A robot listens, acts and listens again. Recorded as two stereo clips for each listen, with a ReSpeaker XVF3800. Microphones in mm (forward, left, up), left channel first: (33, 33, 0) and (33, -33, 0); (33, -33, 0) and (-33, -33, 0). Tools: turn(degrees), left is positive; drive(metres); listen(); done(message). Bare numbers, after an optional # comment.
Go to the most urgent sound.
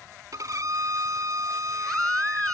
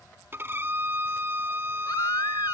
# The baby crying: 10° left.
turn(10)
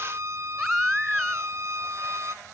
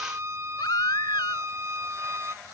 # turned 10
drive(1.0)
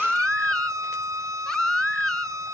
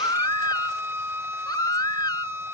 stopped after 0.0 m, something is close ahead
done("Blocked. The baby crying is further on, straight ahead.")